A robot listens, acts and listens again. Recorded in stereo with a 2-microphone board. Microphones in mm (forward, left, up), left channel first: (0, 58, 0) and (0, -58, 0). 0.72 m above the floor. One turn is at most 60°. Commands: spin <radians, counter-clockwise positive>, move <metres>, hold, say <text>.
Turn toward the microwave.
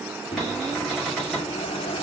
spin 0.96
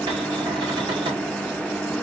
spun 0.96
spin 0.17
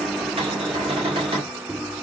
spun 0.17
say Facing the microwave, under 1 m away.